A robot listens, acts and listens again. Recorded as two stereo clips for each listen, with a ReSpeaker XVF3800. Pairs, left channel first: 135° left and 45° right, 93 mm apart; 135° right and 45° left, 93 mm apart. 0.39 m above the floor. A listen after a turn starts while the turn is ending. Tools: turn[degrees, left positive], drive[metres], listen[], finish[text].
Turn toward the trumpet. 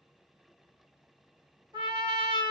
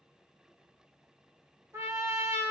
Thought: The trumpet: 15° right.
Action: turn[-15]
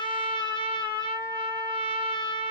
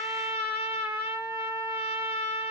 Action: finish[Found it: a trumpet, straight ahead, 1 to 2 m away.]